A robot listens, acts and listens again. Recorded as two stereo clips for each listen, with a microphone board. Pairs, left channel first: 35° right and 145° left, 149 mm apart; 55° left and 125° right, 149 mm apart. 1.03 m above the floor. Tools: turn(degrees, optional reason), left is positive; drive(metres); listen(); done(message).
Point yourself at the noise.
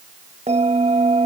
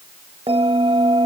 turn(degrees=-175, reason="The bell: 175° right.")
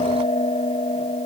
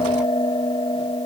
done("Found it: a bell, straight ahead.")